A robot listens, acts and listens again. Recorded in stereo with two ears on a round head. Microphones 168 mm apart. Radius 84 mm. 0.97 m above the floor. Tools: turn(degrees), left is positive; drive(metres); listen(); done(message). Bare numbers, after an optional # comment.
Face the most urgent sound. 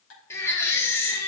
turn(30)
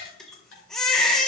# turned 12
done("Facing the baby crying, 1 to 2 m away.")